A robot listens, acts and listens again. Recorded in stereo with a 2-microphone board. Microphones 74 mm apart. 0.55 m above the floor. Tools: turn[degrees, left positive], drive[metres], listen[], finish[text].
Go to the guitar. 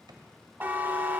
Action: listen[]
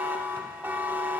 Action: listen[]
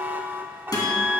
Thought: The guitar: about 60° left or 120° left.
Action: turn[60]
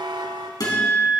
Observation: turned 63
Thought: So it is at 55° left.
Action: turn[55]
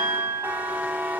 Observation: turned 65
Thought: The guitar is now 10° right.
Action: turn[-10]
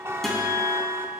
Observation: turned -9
Action: drive[1.0]
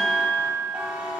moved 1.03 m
Action: drive[1.0]
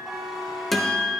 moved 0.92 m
Action: drive[1.0]
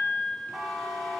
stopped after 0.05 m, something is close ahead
Action: finish[Arrived at the guitar, straight ahead.]